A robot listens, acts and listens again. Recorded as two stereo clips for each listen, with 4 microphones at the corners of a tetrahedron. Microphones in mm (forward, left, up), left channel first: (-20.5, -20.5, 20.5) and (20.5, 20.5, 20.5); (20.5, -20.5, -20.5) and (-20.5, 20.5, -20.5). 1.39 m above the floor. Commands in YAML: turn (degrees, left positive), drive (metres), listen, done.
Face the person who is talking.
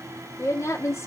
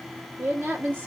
turn: -170
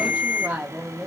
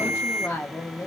turn: -20
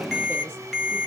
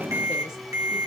listen: true
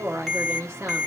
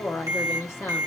done: "Found it: a woman speaking, straight ahead, under 1 m away."